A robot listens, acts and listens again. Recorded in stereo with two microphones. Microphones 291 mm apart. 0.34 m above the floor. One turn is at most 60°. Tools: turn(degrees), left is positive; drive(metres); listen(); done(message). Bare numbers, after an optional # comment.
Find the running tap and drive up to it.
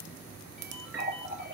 # The running tap: about 40° right or 140° right.
turn(-40)
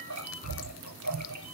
# So it is at 100° right.
turn(-60)
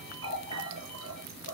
# The running tap is now 50° right.
turn(-50)
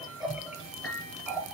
drive(1.0)
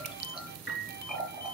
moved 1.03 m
drive(1.0)
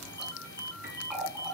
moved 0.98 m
drive(1.0)
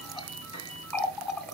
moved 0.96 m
drive(1.0)
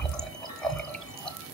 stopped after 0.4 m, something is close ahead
done("I am next to the running tap.")